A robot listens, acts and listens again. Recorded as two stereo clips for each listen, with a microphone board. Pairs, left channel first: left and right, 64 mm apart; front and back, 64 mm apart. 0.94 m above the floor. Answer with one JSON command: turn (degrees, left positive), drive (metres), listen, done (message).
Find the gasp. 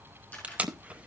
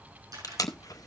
{"listen": true}
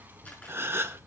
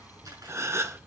{"turn": -140}
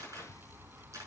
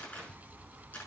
{"done": "Facing where the gasp came from. I can't hear it now."}